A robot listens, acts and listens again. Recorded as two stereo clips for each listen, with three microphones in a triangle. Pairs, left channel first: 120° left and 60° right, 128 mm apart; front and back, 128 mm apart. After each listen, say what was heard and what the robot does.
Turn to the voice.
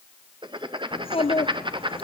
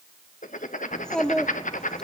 The child speaking: 85° left. Turn 85° left.
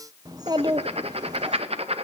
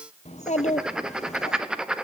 Facing the child speaking, under 1 m away.